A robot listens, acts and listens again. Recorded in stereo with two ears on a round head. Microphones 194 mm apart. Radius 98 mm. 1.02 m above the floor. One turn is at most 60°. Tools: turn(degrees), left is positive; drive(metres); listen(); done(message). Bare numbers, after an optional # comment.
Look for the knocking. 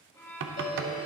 # The knocking: about 60° right or 120° right.
turn(-60)
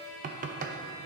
# So it is at 45° right.
turn(-45)
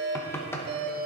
# The knocking is now 15° left.
turn(15)
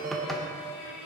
done("Found it: knocking, straight ahead, under 1 m away.")